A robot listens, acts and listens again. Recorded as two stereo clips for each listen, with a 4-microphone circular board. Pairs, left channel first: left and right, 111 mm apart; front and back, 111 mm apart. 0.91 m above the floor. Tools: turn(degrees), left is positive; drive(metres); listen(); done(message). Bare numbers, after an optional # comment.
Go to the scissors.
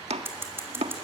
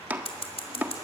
# The scissors: 20° right.
turn(-20)
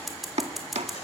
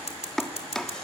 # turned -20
drive(1.0)
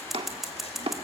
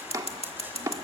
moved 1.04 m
drive(1.0)
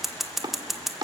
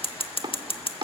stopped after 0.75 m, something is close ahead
done("I am next to the scissors.")